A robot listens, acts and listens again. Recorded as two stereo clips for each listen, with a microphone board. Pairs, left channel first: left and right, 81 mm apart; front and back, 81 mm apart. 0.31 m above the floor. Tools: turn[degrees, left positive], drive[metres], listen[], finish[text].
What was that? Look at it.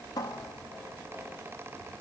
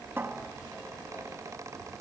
Thought: The cupboard door: 120° left.
Action: turn[120]
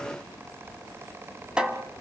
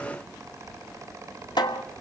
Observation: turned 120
Thought: The cupboard door is now 10° right.
Action: turn[-10]
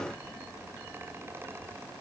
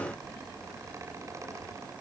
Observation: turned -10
Action: listen[]
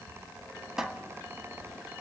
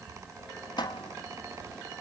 Action: finish[Facing the cupboard door, 1 to 2 m away.]